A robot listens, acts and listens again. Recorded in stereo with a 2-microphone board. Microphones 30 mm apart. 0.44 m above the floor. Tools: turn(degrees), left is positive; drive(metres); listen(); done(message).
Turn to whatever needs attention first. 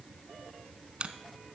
listen()
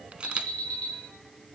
turn(degrees=60)
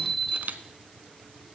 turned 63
turn(degrees=10)
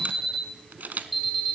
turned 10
done("Found it: an alarm, straight ahead, 2 to 4 m away.")